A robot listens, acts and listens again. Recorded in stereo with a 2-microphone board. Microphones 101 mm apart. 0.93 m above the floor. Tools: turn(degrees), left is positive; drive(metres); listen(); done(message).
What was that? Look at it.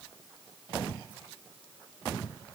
listen()
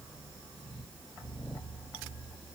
listen()
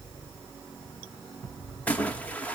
turn(degrees=30)
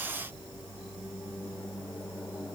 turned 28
listen()
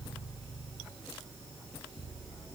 done("I heard a splash, but can't make it out now. It was about 15° right or 140° left.")